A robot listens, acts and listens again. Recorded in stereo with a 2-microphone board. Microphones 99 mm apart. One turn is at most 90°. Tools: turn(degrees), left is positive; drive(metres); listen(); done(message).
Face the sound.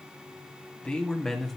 turn(degrees=30)
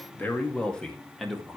turn(degrees=-30)
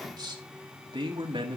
turn(degrees=-90)
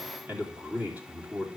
turn(degrees=-15)
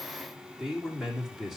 done("Found it: a man speaking, straight ahead, 2 to 4 m away.")